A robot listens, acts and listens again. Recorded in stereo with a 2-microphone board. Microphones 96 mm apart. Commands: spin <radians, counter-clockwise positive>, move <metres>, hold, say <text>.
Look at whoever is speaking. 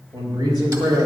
spin -0.70
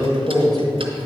spin 0.17
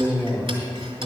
say Found it: a man speaking, straight ahead.